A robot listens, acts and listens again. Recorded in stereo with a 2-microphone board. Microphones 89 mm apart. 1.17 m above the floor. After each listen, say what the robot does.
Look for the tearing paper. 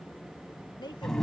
Keep listening.
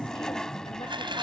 Turn 70° right.
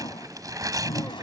Turn 40° right.
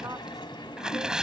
Facing the tearing paper.